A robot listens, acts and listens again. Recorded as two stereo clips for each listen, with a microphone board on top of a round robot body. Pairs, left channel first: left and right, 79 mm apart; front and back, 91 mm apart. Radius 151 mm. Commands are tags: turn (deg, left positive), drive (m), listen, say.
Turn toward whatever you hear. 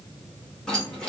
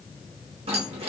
<turn deg="170"/>
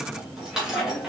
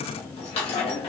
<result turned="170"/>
<turn deg="-10"/>
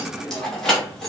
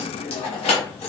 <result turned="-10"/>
<say>Found it: keys jangling, straight ahead, 1 to 2 m away.</say>